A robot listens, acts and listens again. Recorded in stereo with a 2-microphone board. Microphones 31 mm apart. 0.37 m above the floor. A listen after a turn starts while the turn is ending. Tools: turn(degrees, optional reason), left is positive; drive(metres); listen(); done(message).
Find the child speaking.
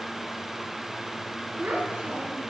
turn(degrees=-55, reason="The child speaking: about 55° right or 125° right.")
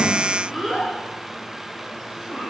turn(degrees=15, reason="So it is at 15° left.")
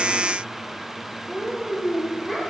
turn(degrees=10, reason="The child speaking is now 10° left.")
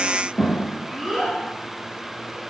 done("Facing the child speaking, 2 to 4 m away.")